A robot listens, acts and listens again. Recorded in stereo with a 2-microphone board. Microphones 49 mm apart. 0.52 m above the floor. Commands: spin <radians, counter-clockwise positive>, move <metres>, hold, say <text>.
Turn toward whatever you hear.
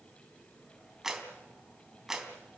spin -0.52
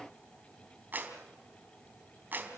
spin -2.44
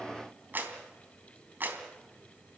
spin -0.70
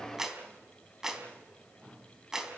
spin -0.17
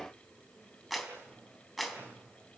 say Facing the clap, 2 to 4 m away.